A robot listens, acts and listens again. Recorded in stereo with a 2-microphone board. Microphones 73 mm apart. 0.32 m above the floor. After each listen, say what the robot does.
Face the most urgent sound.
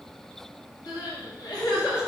Turn 60° left.
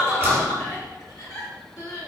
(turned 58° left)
Turn 55° left.
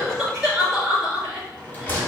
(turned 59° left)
Found it: crying, straight ahead.